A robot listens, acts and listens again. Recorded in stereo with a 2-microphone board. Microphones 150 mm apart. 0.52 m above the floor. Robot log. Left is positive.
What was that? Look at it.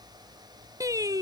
note: The singing: about 25° right or 155° right.
cmd yaw -25
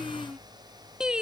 end: Facing the singing.